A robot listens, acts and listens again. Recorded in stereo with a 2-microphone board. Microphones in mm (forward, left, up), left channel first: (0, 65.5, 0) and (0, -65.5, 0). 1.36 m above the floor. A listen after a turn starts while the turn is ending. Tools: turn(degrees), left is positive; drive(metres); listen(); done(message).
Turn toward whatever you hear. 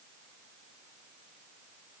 listen()
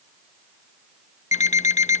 turn(degrees=65)
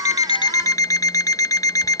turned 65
turn(degrees=30)
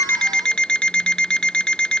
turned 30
done("Found it: an alarm clock, straight ahead.")